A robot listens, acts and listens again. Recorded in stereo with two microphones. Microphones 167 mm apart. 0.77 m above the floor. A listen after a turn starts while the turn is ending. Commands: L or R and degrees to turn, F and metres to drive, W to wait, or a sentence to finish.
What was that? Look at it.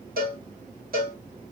R70
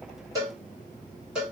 Facing the cowbell.